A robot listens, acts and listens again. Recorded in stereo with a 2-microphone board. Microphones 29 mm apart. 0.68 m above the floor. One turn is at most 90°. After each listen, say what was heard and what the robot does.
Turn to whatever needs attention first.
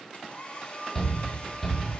Turn 30° left.
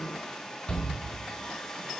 So it is at 140° left. Turn 90° left.
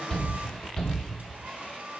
The shout is now 25° left. Turn 25° left.
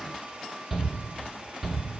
The shout is now 10° right. Turn 10° right.
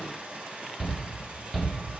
Facing the shout.